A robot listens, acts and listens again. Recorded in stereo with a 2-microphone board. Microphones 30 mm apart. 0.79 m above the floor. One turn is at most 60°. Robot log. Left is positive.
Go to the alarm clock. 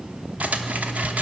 note: The alarm clock: about 20° left or 160° left.
cmd yaw +20
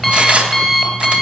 cmd fwd 1.0
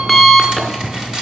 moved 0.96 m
cmd fwd 1.0
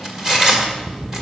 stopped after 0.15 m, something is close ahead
end: I am next to the alarm clock.